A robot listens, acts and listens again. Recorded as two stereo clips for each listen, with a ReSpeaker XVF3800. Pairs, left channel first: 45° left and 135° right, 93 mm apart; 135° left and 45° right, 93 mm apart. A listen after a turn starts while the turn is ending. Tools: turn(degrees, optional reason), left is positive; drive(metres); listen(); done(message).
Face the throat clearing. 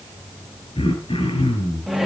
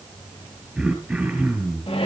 turn(degrees=35, reason="The throat clearing: 35° left.")
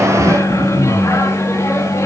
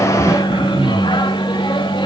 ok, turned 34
done("Facing the throat clearing, over 4 m away.")